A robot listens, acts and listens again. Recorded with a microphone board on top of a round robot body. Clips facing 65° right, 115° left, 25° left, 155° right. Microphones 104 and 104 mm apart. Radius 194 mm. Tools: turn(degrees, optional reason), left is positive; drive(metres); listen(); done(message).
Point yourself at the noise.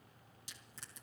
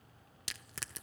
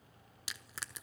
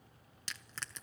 turn(degrees=105, reason="The crushing: 105° left.")
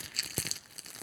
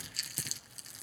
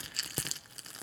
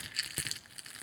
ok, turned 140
turn(degrees=-40, reason="The crushing is now 40° right.")
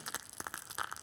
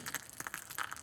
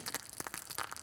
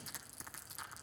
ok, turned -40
done("Found it: crushing, straight ahead, 1 to 2 m away.")